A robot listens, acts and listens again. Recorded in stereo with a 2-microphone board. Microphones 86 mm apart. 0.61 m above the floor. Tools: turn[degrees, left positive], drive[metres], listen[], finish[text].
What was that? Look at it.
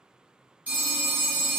Thought: The phone ringing: about 15° right or 165° right.
Action: turn[-15]
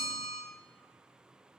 Action: finish[Facing the phone ringing, under 1 m away.]